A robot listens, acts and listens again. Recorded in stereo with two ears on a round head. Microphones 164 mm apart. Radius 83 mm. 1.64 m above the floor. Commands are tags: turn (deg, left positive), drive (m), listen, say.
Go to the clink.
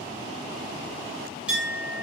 <turn deg="-30"/>
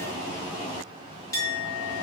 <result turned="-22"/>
<turn deg="15"/>
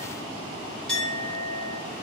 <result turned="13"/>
<drive m="1.0"/>
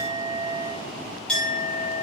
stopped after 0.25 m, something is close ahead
<say>Blocked. The clink is further on, straight ahead.</say>